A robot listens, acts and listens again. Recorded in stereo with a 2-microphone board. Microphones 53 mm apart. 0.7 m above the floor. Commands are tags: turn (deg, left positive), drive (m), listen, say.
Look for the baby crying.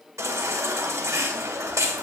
<turn deg="-90"/>
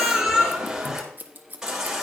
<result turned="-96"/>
<turn deg="-10"/>
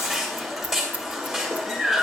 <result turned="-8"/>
<say>Found it: a baby crying, straight ahead.</say>